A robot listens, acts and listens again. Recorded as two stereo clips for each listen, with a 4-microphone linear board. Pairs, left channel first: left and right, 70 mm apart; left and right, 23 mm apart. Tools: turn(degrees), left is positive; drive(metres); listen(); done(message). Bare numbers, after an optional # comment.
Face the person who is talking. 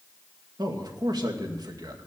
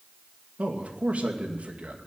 turn(-90)
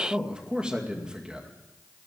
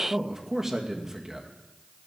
# So it is at 15° right.
turn(-15)
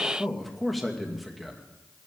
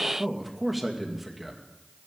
done("Found it: a man speaking, straight ahead, 2 to 4 m away.")